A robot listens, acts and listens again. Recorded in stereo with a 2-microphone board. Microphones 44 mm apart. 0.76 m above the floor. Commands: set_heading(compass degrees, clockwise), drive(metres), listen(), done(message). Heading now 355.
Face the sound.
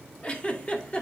set_heading(325)
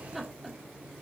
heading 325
done("Facing the giggle, 1 to 2 m away.")